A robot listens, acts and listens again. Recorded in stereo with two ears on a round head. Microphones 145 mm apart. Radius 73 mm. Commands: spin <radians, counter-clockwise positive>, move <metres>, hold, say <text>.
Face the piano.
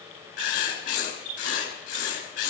hold
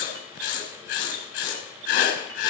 hold
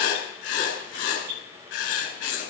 say I can't make out a piano, only writing.